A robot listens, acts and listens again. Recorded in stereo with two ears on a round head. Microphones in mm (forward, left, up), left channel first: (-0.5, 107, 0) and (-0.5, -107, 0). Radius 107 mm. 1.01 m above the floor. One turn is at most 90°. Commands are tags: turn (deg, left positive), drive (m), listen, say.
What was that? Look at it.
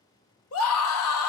<turn deg="65"/>
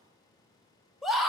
<say>Facing the scream.</say>